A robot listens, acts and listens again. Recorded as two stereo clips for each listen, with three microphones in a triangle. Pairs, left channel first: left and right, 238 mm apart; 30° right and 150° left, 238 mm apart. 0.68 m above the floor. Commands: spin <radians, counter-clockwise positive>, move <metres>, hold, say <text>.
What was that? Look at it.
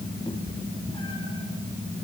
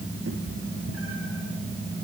spin 2.79
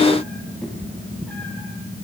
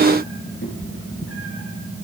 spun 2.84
say Found it: a cat meowing, straight ahead, over 4 m away.